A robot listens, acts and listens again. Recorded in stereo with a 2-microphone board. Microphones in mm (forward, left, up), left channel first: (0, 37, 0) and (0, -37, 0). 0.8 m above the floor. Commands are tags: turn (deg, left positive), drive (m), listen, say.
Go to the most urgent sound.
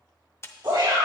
<turn deg="-70"/>
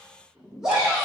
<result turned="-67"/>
<drive m="1.0"/>
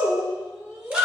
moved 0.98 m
<turn deg="-10"/>
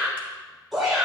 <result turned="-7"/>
<drive m="1.0"/>
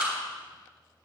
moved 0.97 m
<drive m="1.0"/>
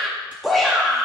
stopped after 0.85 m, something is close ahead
<say>Arrived at the shout, straight ahead.</say>